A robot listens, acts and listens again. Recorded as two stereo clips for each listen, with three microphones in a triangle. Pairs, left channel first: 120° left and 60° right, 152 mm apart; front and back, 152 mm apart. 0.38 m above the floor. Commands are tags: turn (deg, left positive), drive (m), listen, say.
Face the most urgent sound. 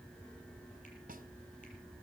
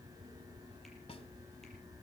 <listen/>
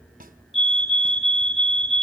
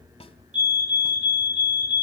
<turn deg="-150"/>
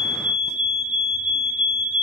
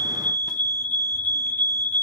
<turn deg="-15"/>
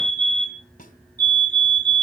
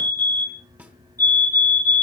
<say>Facing the fire alarm, 2 to 4 m away.</say>